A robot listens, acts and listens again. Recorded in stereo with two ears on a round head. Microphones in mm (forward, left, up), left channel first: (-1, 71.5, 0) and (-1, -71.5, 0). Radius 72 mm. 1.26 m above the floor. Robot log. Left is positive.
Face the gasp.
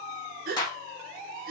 note: The gasp: about 60° right or 120° right.
cmd yaw -60
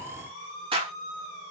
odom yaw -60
cmd idle
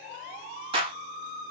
end: I heard a gasp, but can't make it out now. It was about straight ahead or 60° right.